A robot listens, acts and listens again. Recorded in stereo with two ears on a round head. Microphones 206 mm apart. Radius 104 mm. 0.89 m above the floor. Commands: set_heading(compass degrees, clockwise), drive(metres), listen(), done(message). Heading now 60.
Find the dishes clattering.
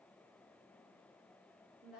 listen()
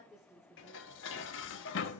set_heading(5)
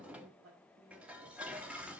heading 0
done("Facing the dishes clattering.")